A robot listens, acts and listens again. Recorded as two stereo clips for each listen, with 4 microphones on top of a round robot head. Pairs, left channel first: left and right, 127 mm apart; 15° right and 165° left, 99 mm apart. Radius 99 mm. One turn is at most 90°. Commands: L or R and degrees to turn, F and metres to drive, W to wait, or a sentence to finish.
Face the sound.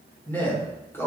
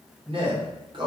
L90
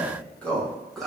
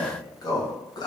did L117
Found it: a man speaking, straight ahead, 1 to 2 m away.